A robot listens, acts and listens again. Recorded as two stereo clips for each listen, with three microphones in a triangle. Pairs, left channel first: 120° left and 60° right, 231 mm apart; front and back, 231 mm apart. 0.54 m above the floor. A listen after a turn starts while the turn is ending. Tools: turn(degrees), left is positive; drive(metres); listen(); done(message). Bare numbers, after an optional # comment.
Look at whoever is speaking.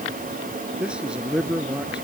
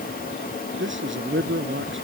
# The man speaking: 145° right.
turn(-145)
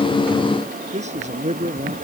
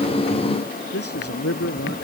done("Facing the man speaking.")